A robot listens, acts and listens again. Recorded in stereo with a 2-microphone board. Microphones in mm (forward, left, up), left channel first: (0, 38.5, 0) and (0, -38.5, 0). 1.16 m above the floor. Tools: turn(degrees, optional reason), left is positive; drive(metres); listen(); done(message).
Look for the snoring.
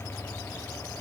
listen()
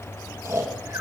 turn(degrees=-30, reason="The snoring: about 30° right or 150° right.")
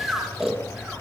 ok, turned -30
done("Found it: snoring, straight ahead.")